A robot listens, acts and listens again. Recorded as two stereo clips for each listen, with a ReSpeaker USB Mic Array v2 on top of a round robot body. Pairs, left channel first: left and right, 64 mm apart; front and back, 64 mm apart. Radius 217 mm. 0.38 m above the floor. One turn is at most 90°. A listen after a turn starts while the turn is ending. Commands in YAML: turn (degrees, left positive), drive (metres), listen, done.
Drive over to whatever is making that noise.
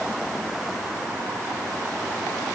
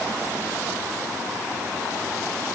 listen: true
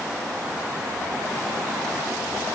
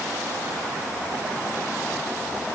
listen: true
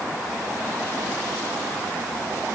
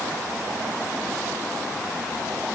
done: "I can't make out anything to turn to."